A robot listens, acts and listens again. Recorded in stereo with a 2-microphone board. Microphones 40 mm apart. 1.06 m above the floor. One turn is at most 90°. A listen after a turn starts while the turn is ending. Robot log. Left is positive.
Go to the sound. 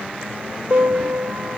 note: The piano: about 50° right or 130° right.
cmd yaw -50
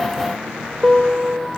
cmd fwd 1.0
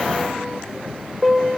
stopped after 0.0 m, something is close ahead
end: Blocked. The piano is further on, straight ahead.